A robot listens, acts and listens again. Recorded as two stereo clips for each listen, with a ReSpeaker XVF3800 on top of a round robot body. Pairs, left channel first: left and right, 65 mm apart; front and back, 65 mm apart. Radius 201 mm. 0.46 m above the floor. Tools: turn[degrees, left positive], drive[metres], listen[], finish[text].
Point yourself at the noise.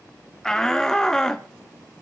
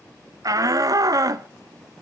Thought: The shout: 170° left.
Action: turn[170]
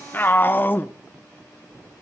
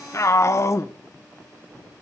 Thought: The shout is now 35° left.
Action: turn[35]
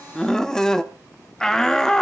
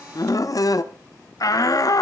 Thought: The shout is now 10° left.
Action: turn[10]
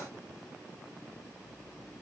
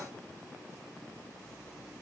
Action: listen[]
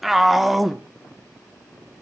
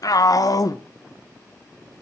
Action: finish[Found it: a shout, straight ahead, 1 to 2 m away.]